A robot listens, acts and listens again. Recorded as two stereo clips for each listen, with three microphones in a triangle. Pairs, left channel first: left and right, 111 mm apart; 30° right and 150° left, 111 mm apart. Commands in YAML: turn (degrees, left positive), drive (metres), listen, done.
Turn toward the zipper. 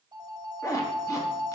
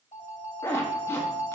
turn: 35
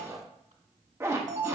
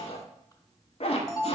turn: -25
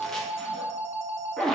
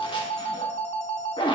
done: "Facing the zipper, under 1 m away."